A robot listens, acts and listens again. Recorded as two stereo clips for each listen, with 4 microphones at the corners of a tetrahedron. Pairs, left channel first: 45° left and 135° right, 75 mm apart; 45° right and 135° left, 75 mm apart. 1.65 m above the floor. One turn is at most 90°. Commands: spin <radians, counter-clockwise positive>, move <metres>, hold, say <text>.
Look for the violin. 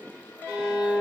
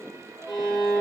spin -1.13
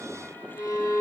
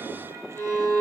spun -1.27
say Found it: a violin, straight ahead.